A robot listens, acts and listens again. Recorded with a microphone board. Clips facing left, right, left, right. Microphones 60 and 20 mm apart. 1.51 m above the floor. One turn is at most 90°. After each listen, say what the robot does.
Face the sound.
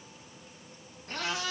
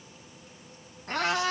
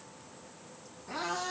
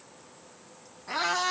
Turn 65° right.
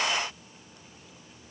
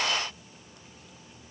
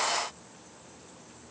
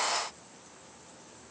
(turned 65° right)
Keep listening.
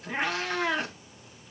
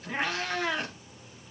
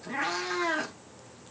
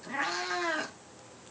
Found it: a cat meowing, straight ahead, 2 to 4 m away.